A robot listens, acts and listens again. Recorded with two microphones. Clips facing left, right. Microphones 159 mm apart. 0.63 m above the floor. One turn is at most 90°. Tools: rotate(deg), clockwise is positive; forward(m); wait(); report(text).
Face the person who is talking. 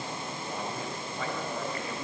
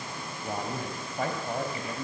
rotate(45)
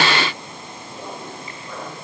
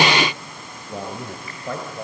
rotate(75)
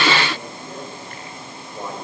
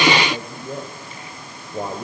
rotate(30)
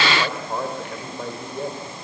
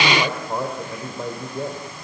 report("Facing the man speaking, 2 to 4 m away.")